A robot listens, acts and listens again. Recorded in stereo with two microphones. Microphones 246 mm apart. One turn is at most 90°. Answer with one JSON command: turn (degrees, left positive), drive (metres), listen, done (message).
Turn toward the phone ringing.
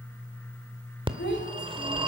{"turn": -20}
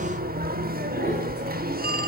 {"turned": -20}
{"turn": -90}
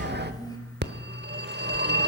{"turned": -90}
{"turn": -50}
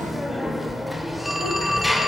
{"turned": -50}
{"done": "Found it: a phone ringing, straight ahead."}